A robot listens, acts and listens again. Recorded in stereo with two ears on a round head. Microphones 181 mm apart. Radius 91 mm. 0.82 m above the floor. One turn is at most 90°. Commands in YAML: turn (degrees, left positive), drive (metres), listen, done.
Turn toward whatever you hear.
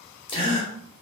turn: 25
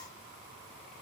listen: true
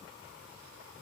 done: "I heard a gasp, but can't make it out now. It was about straight ahead or 130° left."